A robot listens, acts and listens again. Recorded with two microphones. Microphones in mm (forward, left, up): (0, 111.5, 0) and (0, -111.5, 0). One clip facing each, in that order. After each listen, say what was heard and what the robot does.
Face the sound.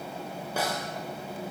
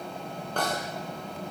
Turn 30° left.
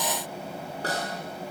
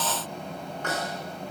So it is at 145° left. Turn 145° left.
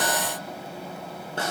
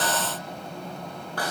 The snare drum is now 25° left. Turn 25° left.
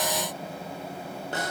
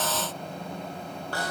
The snare drum is now 20° left. Turn 20° left.
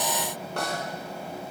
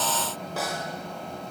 Facing the snare drum, over 4 m away.